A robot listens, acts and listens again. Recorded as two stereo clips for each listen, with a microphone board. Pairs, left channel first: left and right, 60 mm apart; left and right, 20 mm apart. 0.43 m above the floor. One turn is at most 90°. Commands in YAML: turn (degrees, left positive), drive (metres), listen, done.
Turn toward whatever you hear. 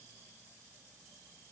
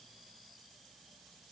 listen: true
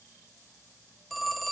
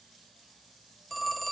turn: 30
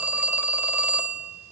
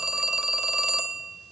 turn: -30
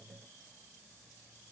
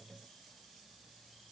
listen: true
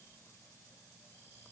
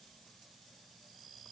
listen: true
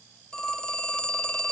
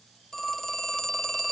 turn: 20
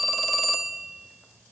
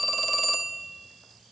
done: "Found it: a phone ringing, straight ahead."